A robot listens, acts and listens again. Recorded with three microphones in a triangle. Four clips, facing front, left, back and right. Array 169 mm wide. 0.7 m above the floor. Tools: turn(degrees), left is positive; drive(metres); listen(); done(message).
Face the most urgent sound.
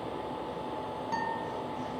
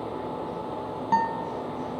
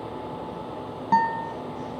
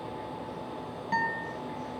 listen()
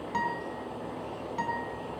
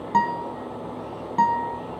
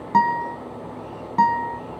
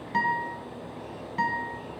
listen()
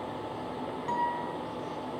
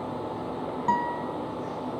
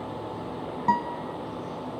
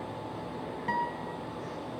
done("I can't make out anything urgent, only a guitar.")